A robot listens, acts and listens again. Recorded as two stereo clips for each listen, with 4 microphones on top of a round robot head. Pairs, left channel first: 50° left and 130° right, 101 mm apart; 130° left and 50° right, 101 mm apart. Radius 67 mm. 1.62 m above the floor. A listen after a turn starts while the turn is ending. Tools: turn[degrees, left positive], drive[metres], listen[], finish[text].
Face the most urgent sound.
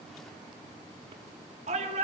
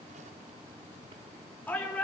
Thought: The shout: 155° right.
Action: turn[-155]
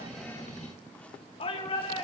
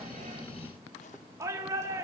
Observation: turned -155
Thought: The shout is now 15° left.
Action: turn[15]
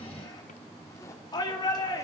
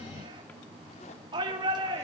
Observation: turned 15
Action: finish[Found it: a shout, straight ahead, over 4 m away.]